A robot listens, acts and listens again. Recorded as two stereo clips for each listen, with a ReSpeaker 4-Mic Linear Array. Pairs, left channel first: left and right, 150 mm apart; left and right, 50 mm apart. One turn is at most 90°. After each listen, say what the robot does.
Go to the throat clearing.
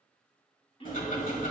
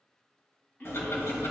Turn 40° left.
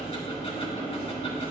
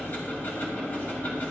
Keep listening.
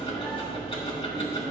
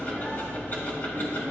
Keep listening.
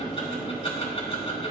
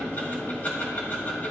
I heard throat clearing, but can't make it out now. It was about straight ahead or 100° left. I did not reach it.